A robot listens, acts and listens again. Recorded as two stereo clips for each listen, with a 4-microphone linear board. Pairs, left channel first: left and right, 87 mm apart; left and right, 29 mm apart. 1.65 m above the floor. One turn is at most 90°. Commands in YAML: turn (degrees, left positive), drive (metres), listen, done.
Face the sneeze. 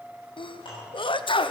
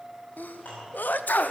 turn: 75
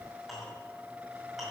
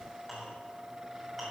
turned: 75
listen: true
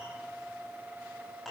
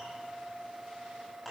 done: "I heard a sneeze, but can't make it out now. It was about straight ahead or 30° left."